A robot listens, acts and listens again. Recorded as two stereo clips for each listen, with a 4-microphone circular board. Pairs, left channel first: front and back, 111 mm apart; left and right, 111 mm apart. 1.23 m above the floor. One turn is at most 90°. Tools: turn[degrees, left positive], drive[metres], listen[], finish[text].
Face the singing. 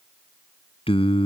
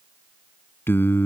Thought: The singing: 20° left.
Action: turn[20]
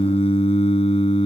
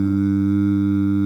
Action: finish[Facing the singing.]